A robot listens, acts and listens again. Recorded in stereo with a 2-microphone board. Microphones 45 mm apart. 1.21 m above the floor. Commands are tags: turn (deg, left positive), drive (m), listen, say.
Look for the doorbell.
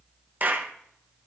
<listen/>
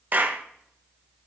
<listen/>
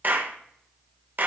<say>I can't make out a doorbell to turn to.</say>